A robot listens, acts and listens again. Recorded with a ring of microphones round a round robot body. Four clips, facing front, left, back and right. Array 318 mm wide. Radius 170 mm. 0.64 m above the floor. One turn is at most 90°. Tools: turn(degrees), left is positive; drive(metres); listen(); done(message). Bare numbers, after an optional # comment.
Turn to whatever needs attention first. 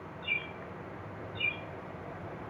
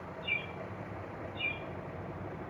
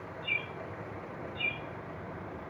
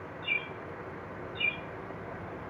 listen()
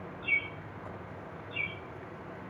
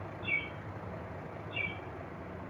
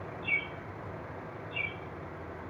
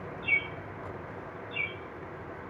listen()
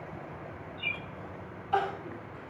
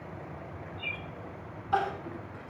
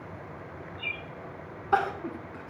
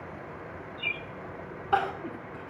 # The crying: 150° right.
turn(-90)
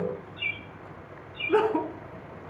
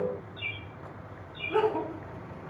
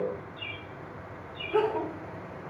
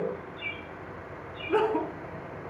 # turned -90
# The crying is now 25° right.
turn(-25)
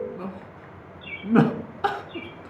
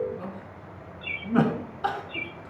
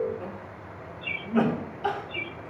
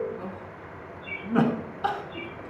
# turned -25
done("Facing the crying, 1 to 2 m away.")